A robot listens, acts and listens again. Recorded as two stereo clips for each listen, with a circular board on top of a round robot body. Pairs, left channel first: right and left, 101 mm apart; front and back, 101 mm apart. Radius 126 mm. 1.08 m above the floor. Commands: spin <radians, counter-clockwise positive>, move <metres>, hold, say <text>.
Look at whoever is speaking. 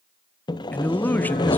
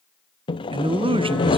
spin -2.79
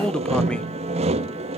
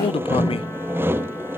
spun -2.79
spin -0.17
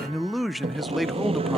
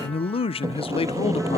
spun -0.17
say Found it: a man speaking, straight ahead.